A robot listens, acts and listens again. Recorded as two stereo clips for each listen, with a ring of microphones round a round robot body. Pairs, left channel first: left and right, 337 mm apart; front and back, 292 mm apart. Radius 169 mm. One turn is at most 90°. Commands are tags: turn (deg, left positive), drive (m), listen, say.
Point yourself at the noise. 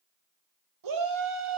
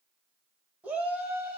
<turn deg="-90"/>
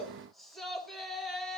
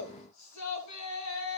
<say>Facing the shout.</say>